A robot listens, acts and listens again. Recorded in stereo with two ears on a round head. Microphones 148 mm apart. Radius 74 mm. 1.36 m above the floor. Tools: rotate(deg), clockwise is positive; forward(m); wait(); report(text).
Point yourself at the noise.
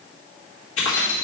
rotate(-90)
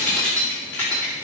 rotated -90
rotate(-10)
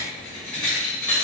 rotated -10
report("Found it: keys jangling, straight ahead, 2 to 4 m away.")